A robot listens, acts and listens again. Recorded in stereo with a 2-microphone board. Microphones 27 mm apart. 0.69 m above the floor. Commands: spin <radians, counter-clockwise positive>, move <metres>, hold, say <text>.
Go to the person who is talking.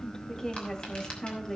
spin 0.35
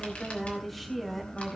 move 1.0
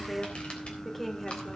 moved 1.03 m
move 1.0
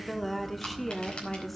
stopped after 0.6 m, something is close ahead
say I am next to the woman speaking.